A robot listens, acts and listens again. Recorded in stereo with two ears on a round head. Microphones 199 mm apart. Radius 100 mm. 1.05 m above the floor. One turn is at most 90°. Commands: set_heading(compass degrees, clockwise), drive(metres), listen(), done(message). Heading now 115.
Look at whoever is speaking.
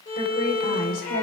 set_heading(75)
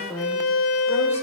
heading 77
done("Found it: a woman speaking, straight ahead, 2 to 4 m away.")